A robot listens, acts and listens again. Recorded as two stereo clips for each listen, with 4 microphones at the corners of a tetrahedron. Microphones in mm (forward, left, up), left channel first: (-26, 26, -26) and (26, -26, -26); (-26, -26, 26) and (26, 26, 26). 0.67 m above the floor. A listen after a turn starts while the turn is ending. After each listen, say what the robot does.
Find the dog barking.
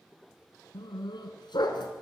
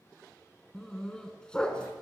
Turn 145° left.
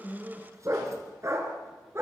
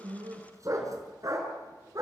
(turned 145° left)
Facing the dog barking.